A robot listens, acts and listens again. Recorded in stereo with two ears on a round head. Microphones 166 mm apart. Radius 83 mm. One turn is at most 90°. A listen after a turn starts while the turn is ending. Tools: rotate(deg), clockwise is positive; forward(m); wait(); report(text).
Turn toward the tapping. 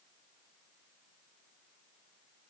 wait()
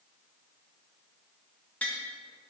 rotate(-30)
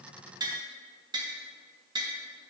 rotate(20)
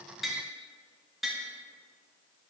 report("Facing the tapping.")